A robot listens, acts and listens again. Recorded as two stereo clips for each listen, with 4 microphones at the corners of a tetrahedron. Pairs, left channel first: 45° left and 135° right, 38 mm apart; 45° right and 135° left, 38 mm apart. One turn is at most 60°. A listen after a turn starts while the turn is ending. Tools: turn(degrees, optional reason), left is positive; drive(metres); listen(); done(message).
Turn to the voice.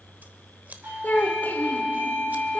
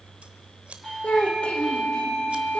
turn(degrees=10, reason="The child speaking: 10° left.")
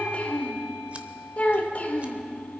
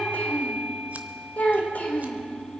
done("Found it: a child speaking, straight ahead.")